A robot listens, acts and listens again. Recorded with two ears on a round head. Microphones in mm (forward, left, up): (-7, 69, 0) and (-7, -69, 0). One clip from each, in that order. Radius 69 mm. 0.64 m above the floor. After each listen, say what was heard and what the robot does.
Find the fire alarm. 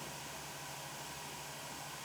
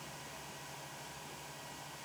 Keep listening.
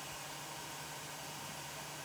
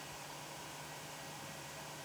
Keep listening.
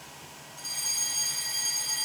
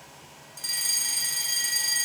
The fire alarm: about 60° right or 120° right. Turn 60° right.
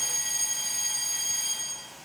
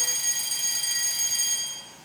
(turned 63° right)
So it is at 40° right. Turn 40° right.
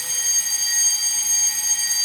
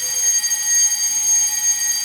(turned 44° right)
Found it: a fire alarm, straight ahead.